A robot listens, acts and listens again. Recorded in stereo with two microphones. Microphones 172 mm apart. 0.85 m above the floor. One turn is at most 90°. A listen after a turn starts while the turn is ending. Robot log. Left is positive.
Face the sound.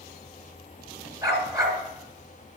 note: The dog barking: about 25° right or 155° right.
cmd yaw -25
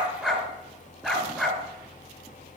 end: Facing the dog barking.